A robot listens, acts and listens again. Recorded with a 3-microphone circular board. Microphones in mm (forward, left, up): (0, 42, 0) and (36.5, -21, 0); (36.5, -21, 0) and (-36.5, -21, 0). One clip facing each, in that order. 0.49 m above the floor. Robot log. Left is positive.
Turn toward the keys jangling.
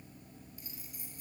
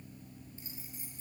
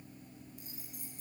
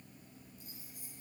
end: Facing the keys jangling.